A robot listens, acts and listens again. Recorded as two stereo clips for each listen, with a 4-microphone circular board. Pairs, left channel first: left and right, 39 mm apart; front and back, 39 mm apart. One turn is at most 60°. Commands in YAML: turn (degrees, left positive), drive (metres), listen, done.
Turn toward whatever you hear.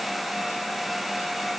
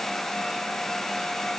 listen: true
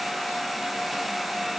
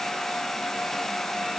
listen: true
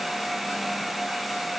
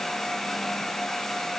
done: "I can't make out anything to turn to."